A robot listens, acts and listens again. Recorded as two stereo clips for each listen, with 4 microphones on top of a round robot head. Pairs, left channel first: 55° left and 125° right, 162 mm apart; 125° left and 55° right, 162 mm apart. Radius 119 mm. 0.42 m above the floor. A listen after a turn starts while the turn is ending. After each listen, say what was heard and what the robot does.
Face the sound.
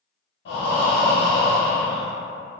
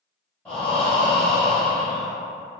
The breathing: 40° left. Turn 40° left.
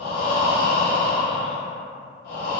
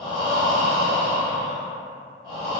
The breathing is now 15° left. Turn 15° left.
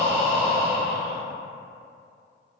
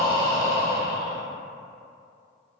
Found it: breathing, straight ahead, under 1 m away.